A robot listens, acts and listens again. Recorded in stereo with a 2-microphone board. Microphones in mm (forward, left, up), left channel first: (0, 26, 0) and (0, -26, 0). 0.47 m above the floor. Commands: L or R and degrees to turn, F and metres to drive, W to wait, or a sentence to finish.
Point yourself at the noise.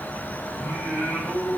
L60
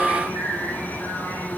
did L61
L45
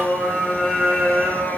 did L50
Facing the singing, 2 to 4 m away.